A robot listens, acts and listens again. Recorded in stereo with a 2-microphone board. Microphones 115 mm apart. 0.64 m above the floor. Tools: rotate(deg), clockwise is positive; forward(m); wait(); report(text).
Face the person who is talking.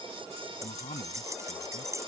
rotate(-90)
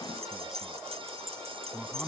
report("Found it: a man speaking, straight ahead.")